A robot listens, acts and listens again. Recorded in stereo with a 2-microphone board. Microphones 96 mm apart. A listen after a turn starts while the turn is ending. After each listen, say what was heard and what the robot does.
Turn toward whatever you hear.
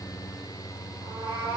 The cat meowing: about 65° right or 115° right. Turn 65° right.
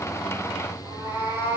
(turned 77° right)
So it is at 40° right. Turn 40° right.
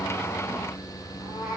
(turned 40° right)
Facing the cat meowing.